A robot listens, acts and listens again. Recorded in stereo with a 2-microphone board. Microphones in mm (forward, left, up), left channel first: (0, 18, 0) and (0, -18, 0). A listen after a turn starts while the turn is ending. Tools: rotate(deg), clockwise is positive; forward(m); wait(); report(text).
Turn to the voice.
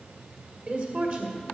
rotate(45)
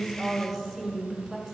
report("Found it: a woman speaking, straight ahead, 1 to 2 m away.")